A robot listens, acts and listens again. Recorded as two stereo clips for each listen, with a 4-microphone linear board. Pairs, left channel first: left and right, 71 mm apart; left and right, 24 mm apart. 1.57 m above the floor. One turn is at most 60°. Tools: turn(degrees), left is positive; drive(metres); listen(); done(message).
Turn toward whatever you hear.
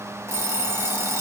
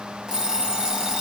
turn(degrees=-40)
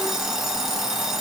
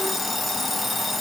done("Facing the alarm clock.")